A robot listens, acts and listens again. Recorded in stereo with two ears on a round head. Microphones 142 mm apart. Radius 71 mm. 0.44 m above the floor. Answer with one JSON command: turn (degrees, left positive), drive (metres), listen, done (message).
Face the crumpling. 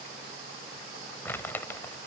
{"turn": 30}
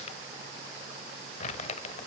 {"turn": 135}
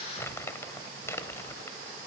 {"turn": 15}
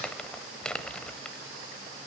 {"done": "Found it: crumpling, straight ahead."}